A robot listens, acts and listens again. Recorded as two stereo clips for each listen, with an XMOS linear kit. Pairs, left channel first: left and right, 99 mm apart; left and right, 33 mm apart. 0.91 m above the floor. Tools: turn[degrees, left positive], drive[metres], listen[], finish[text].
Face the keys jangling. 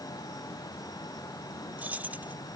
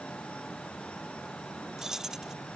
Thought: The keys jangling: about 15° right or 165° right.
Action: turn[-15]
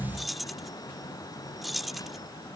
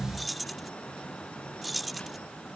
Action: finish[Found it: keys jangling, straight ahead.]